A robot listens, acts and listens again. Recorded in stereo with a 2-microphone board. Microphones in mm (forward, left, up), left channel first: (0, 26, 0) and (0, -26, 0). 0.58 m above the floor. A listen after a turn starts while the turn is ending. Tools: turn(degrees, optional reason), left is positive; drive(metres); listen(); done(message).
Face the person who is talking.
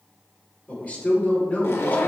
turn(degrees=30, reason="The man speaking: about 30° left or 150° left.")
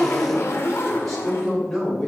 done("Facing the man speaking.")